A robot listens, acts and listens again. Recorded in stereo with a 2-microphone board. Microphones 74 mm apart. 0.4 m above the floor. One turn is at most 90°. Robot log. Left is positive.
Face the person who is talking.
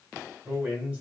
note: The man speaking: about 20° right or 160° right.
cmd yaw -20
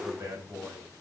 note: So it is at 135° right.
cmd yaw -90
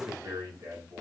note: The man speaking is now 50° right.
cmd yaw -50
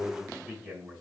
end: Found it: a man speaking, straight ahead.